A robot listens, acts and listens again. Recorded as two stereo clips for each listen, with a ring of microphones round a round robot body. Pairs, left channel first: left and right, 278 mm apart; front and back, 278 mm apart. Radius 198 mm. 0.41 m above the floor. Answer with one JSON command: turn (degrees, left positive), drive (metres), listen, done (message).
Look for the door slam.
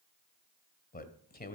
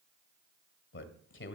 {"listen": true}
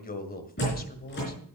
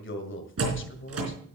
{"turn": 150}
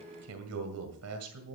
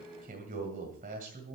{"done": "Facing where the door slam came from. I can't hear it now."}